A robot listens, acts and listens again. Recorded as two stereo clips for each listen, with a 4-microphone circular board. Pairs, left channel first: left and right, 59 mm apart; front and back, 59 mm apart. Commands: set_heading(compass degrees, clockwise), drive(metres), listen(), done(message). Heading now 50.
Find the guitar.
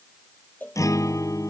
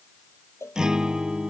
set_heading(305)
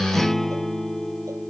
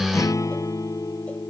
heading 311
done("Facing the guitar.")